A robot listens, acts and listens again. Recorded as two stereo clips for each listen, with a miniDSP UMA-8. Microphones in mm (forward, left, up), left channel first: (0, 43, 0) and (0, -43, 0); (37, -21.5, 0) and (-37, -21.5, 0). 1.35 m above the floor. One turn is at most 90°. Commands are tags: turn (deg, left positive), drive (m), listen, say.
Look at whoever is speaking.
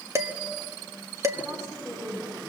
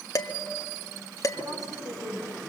<turn deg="-90"/>
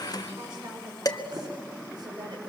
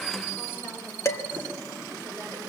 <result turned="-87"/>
<turn deg="-60"/>
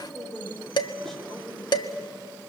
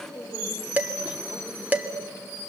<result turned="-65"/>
<say>Found it: a woman speaking, straight ahead, over 4 m away.</say>